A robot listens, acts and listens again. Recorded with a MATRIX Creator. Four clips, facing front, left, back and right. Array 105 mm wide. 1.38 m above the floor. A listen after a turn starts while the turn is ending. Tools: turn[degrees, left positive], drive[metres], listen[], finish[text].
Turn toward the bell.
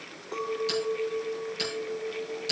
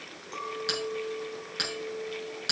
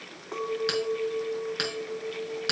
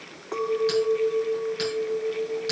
Thought: The bell: 170° left.
Action: turn[170]
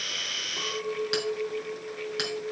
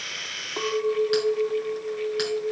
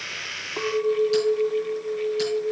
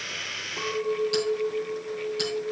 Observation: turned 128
Thought: Nothing new. It was at 40° left.
Action: turn[40]
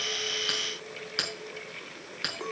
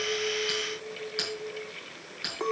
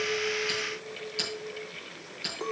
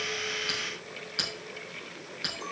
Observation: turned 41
Action: finish[Facing the bell, over 4 m away.]